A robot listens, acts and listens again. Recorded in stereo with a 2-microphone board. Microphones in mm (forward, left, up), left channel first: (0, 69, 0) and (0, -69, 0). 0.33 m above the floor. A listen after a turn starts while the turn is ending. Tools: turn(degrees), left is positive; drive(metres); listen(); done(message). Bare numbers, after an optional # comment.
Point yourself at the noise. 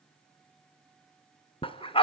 # The dog barking: about 40° left or 140° left.
turn(40)
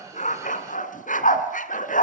# So it is at 100° left.
turn(100)
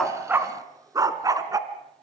# The dog barking is now 25° right.
turn(-25)
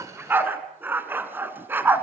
# The dog barking is now 15° right.
turn(-15)
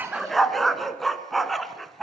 done("Found it: a dog barking, straight ahead.")